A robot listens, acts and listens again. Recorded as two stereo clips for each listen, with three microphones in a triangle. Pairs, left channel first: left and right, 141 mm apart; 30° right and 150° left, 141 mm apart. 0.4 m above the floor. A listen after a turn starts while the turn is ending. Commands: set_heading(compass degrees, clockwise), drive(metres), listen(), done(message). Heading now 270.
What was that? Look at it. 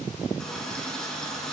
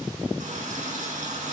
set_heading(95)
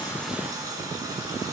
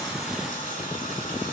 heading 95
set_heading(120)
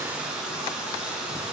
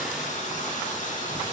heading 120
done("Facing the running tap, 2 to 4 m away.")